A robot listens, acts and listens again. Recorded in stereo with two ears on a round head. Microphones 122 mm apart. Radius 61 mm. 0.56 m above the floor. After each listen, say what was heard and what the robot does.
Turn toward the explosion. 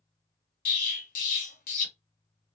The explosion: about 65° left or 115° left. Turn 65° left.
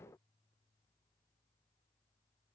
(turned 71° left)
Keep listening.
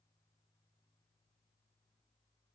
I heard an explosion, but can't make it out now. It was about 5° right or 40° left.